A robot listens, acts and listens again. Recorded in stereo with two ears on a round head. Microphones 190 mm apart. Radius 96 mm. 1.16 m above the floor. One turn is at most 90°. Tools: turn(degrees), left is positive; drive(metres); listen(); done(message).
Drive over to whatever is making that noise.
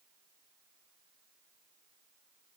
listen()
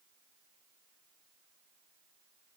listen()
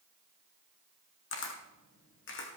turn(degrees=60)
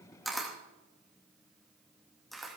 drive(metres=1.0)
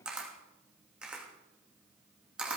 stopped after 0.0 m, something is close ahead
done("Something is in my way. I am facing the camera shutter but have not reached it.")